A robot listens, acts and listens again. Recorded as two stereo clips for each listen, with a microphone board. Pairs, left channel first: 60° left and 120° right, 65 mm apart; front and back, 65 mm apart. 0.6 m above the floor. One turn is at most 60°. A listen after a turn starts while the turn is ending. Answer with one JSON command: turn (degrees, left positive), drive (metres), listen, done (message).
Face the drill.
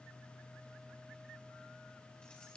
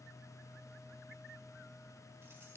{"listen": true}
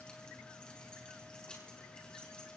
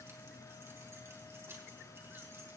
{"listen": true}
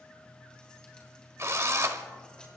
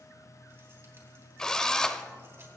{"turn": -60}
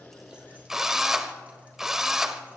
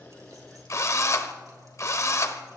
{"turn": -40}
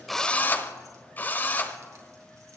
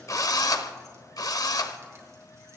{"done": "Found it: a drill, straight ahead."}